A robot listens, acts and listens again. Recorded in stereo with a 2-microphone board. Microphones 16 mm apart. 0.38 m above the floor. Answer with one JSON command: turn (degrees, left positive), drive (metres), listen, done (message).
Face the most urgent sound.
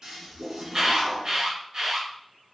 {"turn": -55}
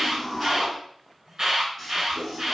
{"turn": -45}
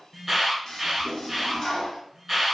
{"turn": -10}
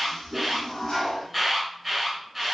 {"done": "Found it: an alarm, straight ahead."}